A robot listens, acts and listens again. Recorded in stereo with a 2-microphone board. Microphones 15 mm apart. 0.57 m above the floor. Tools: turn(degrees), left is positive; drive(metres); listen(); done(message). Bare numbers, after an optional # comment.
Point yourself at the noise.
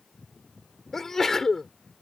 # The sneeze: about 30° left or 150° left.
turn(30)
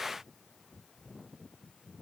listen()
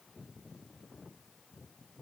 done("I heard a sneeze, but can't make it out now. It was about straight ahead or 120° left.")